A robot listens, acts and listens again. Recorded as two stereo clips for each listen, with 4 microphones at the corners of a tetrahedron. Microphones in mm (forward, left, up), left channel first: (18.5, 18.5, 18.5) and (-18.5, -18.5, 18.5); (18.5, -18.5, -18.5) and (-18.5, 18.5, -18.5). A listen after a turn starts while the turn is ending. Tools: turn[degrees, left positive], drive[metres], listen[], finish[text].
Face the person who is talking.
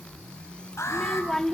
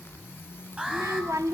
Thought: The child speaking: 125° left.
Action: turn[125]
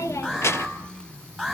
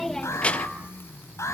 Action: listen[]
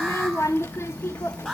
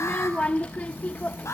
Thought: The child speaking is now 15° left.
Action: turn[15]
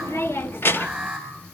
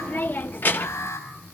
Action: finish[Found it: a child speaking, straight ahead, under 1 m away.]